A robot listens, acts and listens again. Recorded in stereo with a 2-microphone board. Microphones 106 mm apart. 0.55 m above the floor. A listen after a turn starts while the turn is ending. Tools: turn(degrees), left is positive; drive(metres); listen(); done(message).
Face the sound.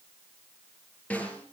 turn(degrees=30)
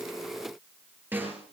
turn(degrees=-20)
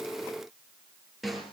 done("Facing the snare drum, over 4 m away.")